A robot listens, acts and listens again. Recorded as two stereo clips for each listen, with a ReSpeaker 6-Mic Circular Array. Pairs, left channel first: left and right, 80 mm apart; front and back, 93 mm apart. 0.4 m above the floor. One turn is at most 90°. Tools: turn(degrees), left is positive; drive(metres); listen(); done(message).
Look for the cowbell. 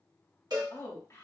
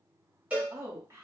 turn(degrees=-90)
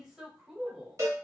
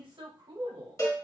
turn(degrees=-50)
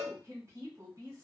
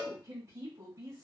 turn(degrees=-10)
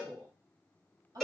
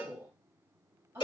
done("Facing the cowbell, 1 to 2 m away.")